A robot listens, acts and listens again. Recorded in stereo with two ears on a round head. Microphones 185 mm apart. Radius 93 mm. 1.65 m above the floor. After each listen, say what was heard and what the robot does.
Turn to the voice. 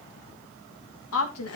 The woman speaking: about 75° left or 105° left. Turn 75° left.
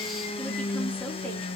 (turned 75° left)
Keep listening.
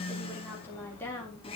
So it is at 10° left. Turn 10° left.
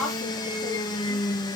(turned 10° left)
Found it: a woman speaking, straight ahead, over 4 m away.